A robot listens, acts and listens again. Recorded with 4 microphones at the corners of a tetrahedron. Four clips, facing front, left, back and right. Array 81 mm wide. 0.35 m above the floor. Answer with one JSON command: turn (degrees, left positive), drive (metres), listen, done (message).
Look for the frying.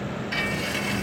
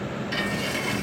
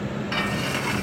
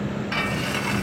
{"turn": -135}
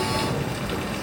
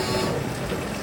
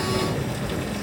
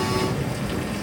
{"listen": true}
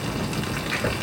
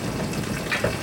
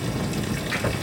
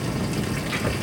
{"listen": true}
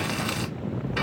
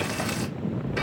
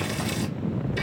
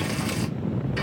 {"turn": 15}
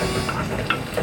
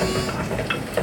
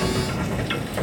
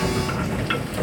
{"done": "Facing the frying."}